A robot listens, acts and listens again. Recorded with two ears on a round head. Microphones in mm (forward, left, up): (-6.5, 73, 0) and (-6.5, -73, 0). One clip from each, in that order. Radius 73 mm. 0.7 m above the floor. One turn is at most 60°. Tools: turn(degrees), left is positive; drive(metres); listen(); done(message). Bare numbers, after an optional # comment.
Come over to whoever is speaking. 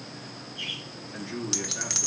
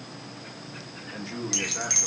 # The man speaking: about 40° right or 140° right.
turn(-40)
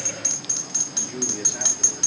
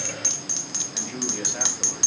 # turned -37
listen()
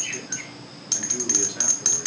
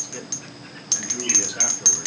listen()
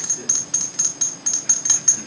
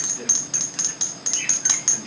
done("I heard a man speaking, but can't make it out now. It was about 5° right or 100° right. I did not reach it.")